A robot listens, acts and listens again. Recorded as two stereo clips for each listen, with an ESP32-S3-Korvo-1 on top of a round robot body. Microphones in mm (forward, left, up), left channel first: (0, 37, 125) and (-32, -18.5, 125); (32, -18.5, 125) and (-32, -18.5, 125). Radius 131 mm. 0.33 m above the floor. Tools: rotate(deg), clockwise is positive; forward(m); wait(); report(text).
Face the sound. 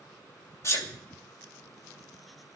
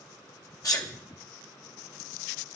rotate(-20)
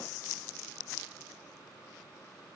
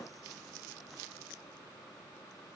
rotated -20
report("I heard a sneeze from this way, but can't make it out now.")